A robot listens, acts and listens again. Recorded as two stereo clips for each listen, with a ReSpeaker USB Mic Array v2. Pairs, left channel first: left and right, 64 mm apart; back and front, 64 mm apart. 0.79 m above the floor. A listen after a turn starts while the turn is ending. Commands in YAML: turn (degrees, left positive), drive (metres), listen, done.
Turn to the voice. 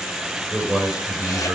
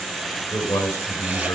turn: -170
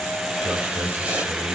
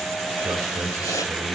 listen: true
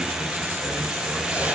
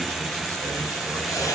listen: true
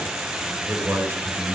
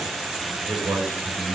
turn: -35
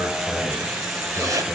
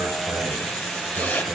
listen: true
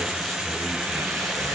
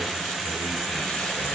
listen: true
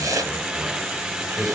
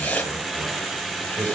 done: "Facing the man speaking."